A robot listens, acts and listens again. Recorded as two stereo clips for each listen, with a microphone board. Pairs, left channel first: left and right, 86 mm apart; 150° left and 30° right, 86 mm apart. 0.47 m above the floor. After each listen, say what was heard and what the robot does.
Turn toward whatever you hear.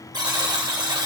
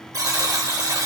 The buzzer: 70° right. Turn 70° right.
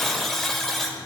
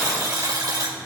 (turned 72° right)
Facing the buzzer.